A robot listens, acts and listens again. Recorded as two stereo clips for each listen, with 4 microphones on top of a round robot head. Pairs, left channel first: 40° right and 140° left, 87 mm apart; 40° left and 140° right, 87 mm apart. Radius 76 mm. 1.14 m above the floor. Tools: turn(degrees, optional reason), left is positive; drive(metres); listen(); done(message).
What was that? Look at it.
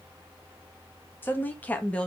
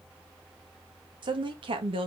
turn(degrees=-120, reason="The woman speaking: 120° right.")
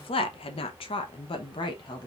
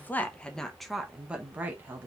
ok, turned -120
turn(degrees=-75, reason="The woman speaking is now 75° right.")
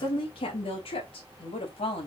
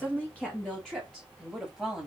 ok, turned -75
turn(degrees=-50, reason="The woman speaking is now 50° right.")
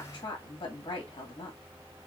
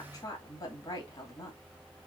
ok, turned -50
done("Facing the woman speaking, 2 to 4 m away.")